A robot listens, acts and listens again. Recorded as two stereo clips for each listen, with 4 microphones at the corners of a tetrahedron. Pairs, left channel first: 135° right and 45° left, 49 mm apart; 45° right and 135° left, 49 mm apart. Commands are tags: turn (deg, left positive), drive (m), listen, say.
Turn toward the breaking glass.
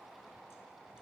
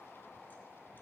<listen/>
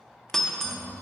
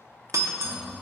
<turn deg="145"/>
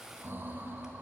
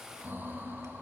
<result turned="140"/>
<say>I heard breaking glass from this way, but can't make it out now.</say>